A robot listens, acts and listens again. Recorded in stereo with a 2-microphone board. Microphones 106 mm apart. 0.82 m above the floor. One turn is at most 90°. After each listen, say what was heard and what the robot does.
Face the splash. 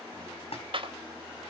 The splash: about 70° left or 110° left. Turn 70° left.
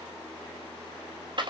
Keep listening.
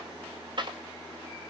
I heard a splash, but can't make it out now. It was about straight ahead or 40° left.